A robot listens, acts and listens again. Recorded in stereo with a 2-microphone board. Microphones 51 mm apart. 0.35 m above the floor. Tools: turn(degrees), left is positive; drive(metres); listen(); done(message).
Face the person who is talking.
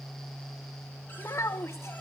turn(degrees=65)
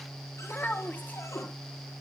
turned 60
turn(degrees=40)
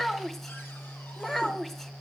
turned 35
done("Found it: a child speaking, straight ahead, 1 to 2 m away.")